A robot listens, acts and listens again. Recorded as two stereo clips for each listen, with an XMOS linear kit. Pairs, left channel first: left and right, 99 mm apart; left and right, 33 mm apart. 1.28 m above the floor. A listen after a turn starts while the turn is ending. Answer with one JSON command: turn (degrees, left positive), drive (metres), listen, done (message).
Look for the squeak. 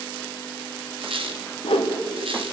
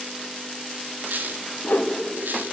{"turn": -60}
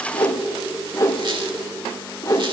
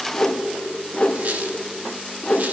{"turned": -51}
{"listen": true}
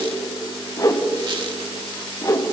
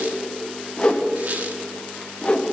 {"listen": true}
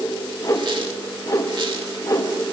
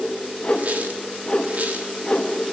{"done": "I heard a squeak, but can't make it out now. It was about 10° right or 65° right."}